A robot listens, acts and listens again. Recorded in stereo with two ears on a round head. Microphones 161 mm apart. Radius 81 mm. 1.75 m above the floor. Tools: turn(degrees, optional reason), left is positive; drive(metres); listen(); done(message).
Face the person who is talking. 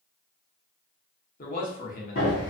turn(degrees=50, reason="The man speaking: about 50° left or 130° left.")
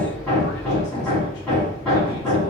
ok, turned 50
listen()
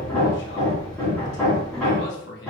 turn(degrees=75, reason="So it is at 75° left.")
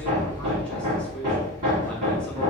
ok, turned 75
listen()
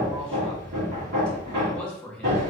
done("Found it: a man speaking, straight ahead, 1 to 2 m away.")